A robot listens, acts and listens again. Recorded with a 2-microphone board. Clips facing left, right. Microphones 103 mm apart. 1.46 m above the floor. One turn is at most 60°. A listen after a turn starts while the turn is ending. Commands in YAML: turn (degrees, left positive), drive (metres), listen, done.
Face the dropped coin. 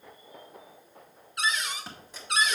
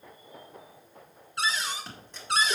turn: 30
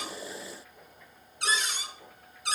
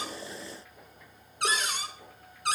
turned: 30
listen: true
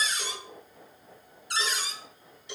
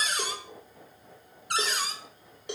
done: "I heard a dropped coin, but can't make it out now. It was about 25° right or 145° left."